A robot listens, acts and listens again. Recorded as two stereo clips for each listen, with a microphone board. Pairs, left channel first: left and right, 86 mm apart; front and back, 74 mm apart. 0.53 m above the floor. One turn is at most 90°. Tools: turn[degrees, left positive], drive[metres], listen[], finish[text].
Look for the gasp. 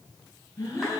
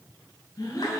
Thought: The gasp: 35° left.
Action: turn[35]
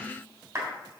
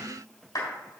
Action: finish[I heard a gasp from this way, but can't make it out now.]